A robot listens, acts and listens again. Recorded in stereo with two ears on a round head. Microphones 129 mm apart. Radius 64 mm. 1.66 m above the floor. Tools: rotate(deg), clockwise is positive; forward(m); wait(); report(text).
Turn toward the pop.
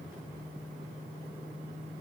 wait()
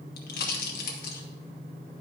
rotate(-75)
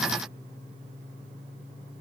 wait()
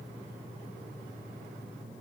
report("I heard a pop, but can't make it out now. It was about straight ahead or 30° left.")